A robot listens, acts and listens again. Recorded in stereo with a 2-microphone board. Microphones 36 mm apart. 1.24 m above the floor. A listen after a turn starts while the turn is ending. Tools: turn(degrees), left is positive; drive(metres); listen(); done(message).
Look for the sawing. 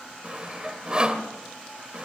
turn(degrees=-25)
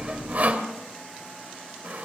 turn(degrees=-125)
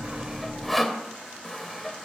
done("Found it: sawing, straight ahead, 2 to 4 m away.")